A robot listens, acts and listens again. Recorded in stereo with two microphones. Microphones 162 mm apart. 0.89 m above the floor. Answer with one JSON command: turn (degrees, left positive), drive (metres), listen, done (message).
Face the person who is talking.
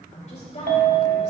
{"turn": 45}
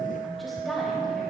{"listen": true}
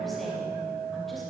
{"listen": true}
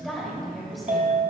{"done": "Found it: a woman speaking, straight ahead."}